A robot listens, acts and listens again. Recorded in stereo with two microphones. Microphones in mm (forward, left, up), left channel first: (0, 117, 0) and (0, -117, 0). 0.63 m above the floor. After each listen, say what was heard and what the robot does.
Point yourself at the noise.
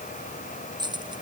The keys jangling: about 20° right or 160° right. Turn 20° right.
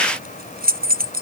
So it is at 140° right. Turn 140° right.
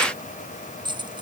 The keys jangling is now 20° right. Turn 20° right.
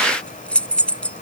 Facing the keys jangling.